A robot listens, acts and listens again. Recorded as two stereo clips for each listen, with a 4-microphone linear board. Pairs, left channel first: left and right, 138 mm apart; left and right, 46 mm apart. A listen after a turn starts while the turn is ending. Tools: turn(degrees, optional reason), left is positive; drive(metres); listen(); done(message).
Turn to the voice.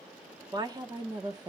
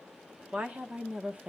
turn(degrees=-30, reason="The woman speaking: about 30° right or 150° right.")
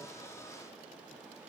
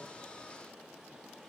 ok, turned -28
turn(degrees=-120, reason="So it is at 120° right.")
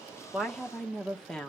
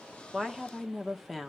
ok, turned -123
done("Found it: a woman speaking, straight ahead, 1 to 2 m away.")